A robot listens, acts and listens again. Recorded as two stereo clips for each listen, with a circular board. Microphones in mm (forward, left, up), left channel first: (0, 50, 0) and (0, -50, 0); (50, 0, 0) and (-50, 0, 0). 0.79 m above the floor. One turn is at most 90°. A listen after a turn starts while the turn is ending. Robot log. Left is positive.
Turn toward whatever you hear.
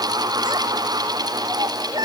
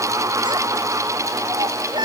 note: The child speaking: 135° right.
cmd yaw -90
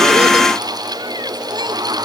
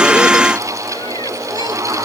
note: Nothing new. It was at 45° right.
cmd yaw -45
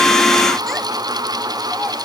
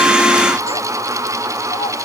cmd idle
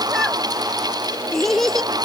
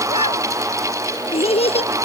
end: Found it: a child speaking, straight ahead.